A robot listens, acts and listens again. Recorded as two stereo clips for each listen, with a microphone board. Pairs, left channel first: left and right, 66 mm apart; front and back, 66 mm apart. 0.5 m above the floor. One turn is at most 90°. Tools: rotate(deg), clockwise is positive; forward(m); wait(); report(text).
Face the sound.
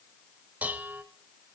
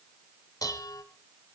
rotate(25)
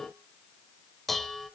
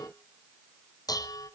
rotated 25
report("Facing the dishes clattering.")